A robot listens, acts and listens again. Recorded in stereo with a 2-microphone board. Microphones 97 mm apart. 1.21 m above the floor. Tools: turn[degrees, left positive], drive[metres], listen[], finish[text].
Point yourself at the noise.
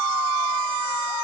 Action: listen[]
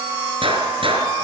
Thought: The gunshot: about 60° right or 120° right.
Action: turn[-60]
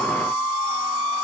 Action: listen[]
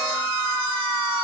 Action: finish[I heard a gunshot, but can't make it out now. It was about straight ahead or 60° right.]